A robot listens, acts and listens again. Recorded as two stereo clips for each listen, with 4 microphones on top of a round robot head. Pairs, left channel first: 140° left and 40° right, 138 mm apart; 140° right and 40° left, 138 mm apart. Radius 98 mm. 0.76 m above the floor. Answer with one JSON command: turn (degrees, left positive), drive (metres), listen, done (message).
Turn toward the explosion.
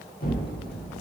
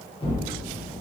{"turn": 165}
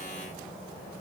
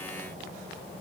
{"done": "Facing where the explosion came from. I can't hear it now."}